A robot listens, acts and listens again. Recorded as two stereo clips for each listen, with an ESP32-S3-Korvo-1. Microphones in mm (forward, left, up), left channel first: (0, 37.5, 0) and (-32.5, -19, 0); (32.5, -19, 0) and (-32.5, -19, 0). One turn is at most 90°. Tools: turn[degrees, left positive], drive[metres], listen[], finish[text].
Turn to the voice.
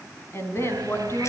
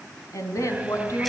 Thought: The woman speaking: 20° left.
Action: turn[20]
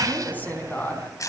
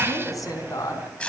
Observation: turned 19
Action: finish[Facing the woman speaking.]